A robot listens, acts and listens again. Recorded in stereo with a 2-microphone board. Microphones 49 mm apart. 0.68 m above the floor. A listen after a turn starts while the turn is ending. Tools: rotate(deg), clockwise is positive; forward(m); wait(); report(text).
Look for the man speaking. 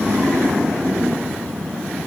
wait()
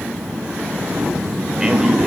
wait()
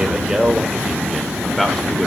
rotate(-30)
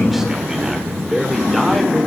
rotate(30)
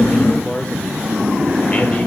rotate(-25)
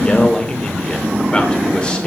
rotate(-20)
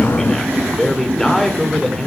report("Found it: a man speaking, straight ahead, 2 to 4 m away.")